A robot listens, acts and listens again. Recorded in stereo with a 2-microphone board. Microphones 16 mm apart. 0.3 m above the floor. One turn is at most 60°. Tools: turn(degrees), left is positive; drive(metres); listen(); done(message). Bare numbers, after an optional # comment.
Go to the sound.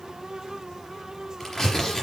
# The tearing paper: about 45° left or 135° left.
turn(45)
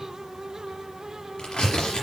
# So it is at 95° left.
turn(60)
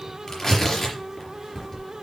# The tearing paper is now 20° left.
turn(20)
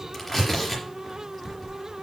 drive(1.0)
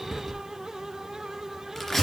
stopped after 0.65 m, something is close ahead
# The tearing paper is now 10° left.
turn(10)
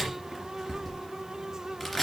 done("Blocked. The tearing paper is further on, straight ahead.")